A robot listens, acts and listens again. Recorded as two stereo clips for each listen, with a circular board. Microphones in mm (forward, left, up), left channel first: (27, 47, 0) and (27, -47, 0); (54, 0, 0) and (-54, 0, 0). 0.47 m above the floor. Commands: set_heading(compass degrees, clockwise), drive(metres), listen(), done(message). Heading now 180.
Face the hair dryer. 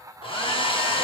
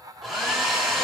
set_heading(90)
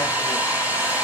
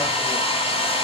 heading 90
set_heading(105)
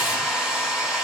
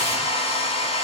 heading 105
done("Facing the hair dryer.")